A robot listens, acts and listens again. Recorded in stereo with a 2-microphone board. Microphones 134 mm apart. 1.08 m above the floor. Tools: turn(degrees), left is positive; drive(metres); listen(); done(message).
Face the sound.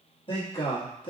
turn(degrees=40)
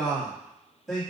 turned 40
done("Found it: a man speaking, straight ahead, 1 to 2 m away.")